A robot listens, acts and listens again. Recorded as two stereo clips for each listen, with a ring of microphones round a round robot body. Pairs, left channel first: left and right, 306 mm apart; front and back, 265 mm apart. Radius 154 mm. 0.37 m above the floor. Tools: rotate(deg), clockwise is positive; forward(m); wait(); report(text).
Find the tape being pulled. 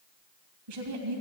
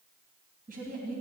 wait()
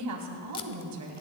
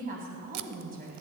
rotate(-165)
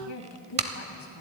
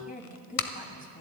rotate(20)
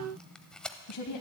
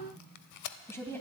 report("Found it: tape being pulled, straight ahead.")